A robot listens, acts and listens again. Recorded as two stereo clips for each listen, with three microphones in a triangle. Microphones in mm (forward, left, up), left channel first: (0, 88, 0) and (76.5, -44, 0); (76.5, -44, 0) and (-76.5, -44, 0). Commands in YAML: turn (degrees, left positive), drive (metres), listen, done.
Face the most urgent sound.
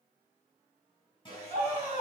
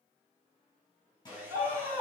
turn: 115
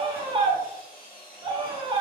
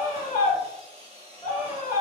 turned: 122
done: "Found it: a scream, straight ahead."